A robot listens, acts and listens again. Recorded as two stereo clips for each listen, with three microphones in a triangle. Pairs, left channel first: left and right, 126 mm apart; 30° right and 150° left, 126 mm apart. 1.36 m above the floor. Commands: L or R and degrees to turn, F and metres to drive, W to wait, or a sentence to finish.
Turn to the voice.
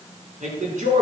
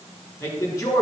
R95
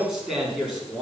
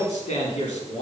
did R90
Facing the man speaking.